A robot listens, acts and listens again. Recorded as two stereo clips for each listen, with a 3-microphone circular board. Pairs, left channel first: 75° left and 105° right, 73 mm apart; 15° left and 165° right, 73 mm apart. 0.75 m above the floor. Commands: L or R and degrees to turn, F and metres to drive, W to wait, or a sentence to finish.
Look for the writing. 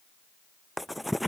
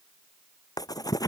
R15
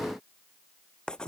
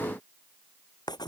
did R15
Facing the writing.